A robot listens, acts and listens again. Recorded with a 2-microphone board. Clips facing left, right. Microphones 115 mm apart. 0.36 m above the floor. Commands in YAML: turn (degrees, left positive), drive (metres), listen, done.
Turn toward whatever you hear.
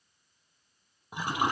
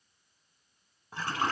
turn: 30
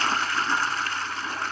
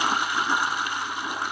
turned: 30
turn: -15
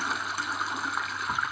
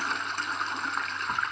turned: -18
done: "Facing the toilet flushing."